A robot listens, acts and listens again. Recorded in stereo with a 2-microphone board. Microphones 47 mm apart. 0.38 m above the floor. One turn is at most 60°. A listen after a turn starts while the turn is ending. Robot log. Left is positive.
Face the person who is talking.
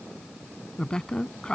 cmd yaw +30
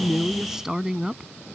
note: So it is at 15° right.
cmd yaw -15
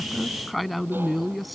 end: Facing the woman speaking.